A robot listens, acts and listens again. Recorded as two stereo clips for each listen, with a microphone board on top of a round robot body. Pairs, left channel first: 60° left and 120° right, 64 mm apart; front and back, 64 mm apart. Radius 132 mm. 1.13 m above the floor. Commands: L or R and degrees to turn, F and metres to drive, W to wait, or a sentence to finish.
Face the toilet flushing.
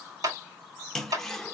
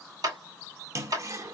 L145
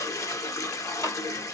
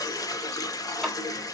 L25
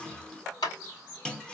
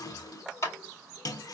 R20
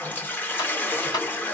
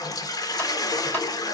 Facing the toilet flushing.